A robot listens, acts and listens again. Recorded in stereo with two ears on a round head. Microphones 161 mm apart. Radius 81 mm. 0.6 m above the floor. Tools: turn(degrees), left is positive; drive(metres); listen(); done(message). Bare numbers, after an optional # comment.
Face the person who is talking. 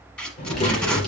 # The child speaking: about 30° left or 150° left.
turn(30)
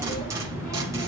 # So it is at 135° left.
turn(135)
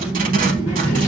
# The child speaking is now 45° left.
turn(45)
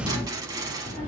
# The child speaking is now 20° left.
turn(20)
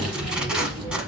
done("Found it: a child speaking, straight ahead.")